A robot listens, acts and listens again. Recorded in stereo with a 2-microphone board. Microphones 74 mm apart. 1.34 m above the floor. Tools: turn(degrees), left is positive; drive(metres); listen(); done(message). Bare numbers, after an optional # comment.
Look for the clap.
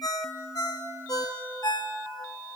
listen()
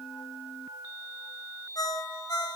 listen()
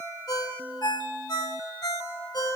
done("I can't make out a clap to turn to.")